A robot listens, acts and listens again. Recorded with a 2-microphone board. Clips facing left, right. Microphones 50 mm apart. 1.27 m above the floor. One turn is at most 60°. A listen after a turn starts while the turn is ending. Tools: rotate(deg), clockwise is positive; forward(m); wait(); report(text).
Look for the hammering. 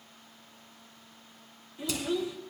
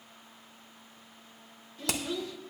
rotate(60)
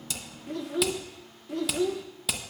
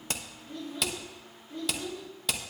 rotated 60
report("Facing the hammering, under 1 m away.")